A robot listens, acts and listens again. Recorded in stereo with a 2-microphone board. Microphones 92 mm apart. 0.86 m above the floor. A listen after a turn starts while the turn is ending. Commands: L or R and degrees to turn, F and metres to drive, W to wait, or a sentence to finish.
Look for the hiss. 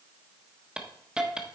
R30
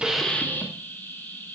L20
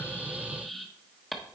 Facing the hiss, 1 to 2 m away.